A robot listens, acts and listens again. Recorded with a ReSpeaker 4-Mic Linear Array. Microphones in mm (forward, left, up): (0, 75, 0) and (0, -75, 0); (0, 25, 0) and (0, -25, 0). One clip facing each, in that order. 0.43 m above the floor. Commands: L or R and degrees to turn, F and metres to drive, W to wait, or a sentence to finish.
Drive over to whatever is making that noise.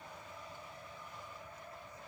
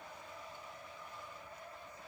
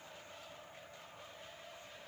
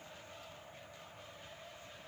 W
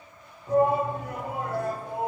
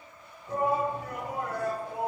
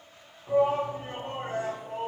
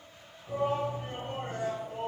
L25
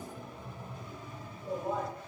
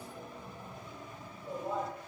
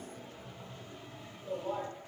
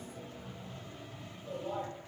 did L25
F1.0
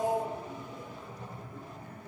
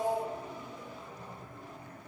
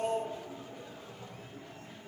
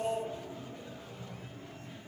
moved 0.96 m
F1.0
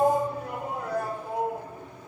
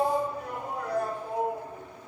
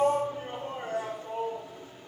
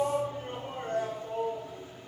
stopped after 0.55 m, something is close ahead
L10
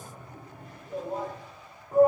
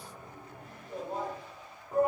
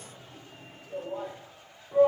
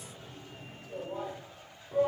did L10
Arrived at the shout, straight ahead.